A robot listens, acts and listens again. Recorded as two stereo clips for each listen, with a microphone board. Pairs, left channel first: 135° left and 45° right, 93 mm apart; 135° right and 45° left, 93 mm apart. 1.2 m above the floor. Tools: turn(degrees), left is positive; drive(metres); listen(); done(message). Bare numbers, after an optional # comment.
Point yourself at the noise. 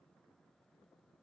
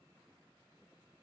listen()
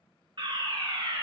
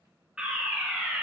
# The fire alarm: 35° right.
turn(-35)
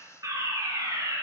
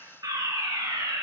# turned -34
done("Found it: a fire alarm, straight ahead.")